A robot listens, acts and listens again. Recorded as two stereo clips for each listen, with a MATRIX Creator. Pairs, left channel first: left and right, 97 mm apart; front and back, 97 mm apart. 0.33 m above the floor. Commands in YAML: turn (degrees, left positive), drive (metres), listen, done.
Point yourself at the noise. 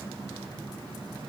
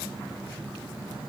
listen: true
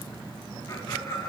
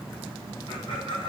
turn: 25
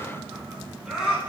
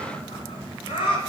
turn: -10
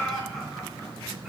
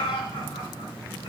done: "Facing the laughter."